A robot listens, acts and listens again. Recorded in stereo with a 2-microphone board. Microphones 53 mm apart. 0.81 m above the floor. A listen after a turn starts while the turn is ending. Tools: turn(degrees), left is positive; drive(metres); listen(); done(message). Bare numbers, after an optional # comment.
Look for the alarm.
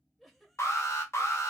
# The alarm: about 65° left or 115° left.
turn(65)
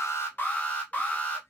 # So it is at 30° left.
turn(30)
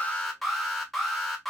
done("Found it: an alarm, straight ahead.")